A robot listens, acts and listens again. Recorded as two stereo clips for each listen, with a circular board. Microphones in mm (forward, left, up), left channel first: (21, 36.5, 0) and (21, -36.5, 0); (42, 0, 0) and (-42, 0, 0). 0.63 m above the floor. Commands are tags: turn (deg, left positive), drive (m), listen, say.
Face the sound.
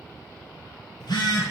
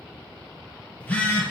<turn deg="75"/>
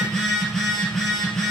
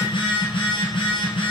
<say>Facing the phone buzzing.</say>